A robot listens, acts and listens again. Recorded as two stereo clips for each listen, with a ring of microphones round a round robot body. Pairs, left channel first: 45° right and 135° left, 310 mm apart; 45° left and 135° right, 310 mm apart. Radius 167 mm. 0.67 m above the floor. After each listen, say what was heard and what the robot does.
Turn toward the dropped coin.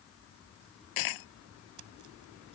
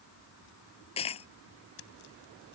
The dropped coin: 25° right. Turn 25° right.
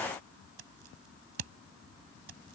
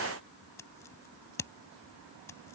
Facing where the dropped coin came from. I can't hear it now.